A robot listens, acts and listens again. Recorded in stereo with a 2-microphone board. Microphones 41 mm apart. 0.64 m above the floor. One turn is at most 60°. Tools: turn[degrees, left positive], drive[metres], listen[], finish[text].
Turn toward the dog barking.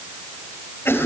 Action: listen[]
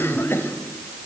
Action: listen[]
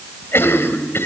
Action: finish[I can't make out a dog barking to turn to.]